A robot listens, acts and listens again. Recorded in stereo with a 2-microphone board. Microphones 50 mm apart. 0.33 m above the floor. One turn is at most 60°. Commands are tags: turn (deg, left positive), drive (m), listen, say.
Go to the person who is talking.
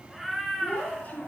<turn deg="35"/>
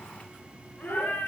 <turn deg="60"/>
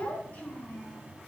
<turn deg="30"/>
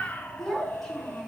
<turn deg="10"/>
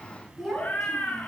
<drive m="1.0"/>
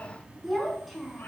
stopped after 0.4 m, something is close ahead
<say>Something is in my way. I am facing the child speaking but have not reached it.</say>